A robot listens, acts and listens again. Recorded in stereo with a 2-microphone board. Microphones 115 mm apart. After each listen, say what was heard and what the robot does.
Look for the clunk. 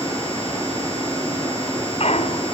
The clunk: about 65° left or 115° left. Turn 65° left.
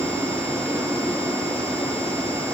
Keep listening.
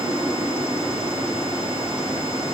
I heard a clunk, but can't make it out now. It was about straight ahead or 50° left.